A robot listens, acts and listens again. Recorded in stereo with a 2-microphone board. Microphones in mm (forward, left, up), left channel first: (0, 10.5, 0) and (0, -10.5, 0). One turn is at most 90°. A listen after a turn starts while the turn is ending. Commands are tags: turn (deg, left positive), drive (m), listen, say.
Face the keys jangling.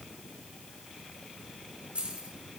<turn deg="-70"/>
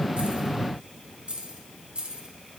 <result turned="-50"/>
<turn deg="-65"/>
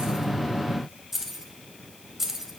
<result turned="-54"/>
<turn deg="-20"/>
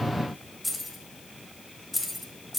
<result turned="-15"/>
<say>Facing the keys jangling, 2 to 4 m away.</say>